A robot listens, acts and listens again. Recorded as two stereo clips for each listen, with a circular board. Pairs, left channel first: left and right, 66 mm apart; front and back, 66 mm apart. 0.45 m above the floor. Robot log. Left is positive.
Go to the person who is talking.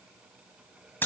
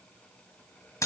cmd idle
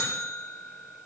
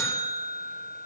cmd idle
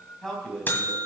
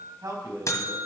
note: The man speaking: 170° left.
cmd yaw +170
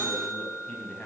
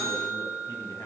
cmd idle
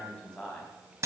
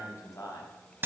note: The man speaking is now 15° left.
cmd yaw +15
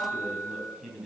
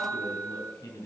cmd fwd 1.0
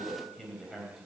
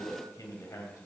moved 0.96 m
cmd fwd 1.0
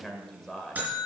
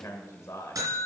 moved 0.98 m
note: The man speaking is now 10° left.
cmd yaw +10
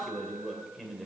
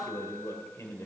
cmd fwd 1.0
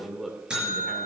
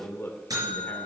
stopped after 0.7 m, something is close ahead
end: Arrived at the man speaking, straight ahead.